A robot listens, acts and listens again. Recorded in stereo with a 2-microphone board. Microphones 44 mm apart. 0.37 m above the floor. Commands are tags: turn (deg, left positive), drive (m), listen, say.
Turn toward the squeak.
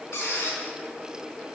<turn deg="70"/>
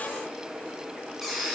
<say>Facing the squeak, 2 to 4 m away.</say>